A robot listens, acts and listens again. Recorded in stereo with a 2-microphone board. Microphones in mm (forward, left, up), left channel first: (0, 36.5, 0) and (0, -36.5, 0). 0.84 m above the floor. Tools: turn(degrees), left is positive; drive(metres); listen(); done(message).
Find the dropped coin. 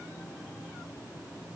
listen()
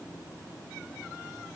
listen()
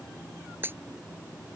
turn(degrees=-30)
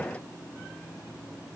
listen()
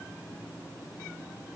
done("I heard a dropped coin, but can't make it out now. It was about straight ahead or 120° right.")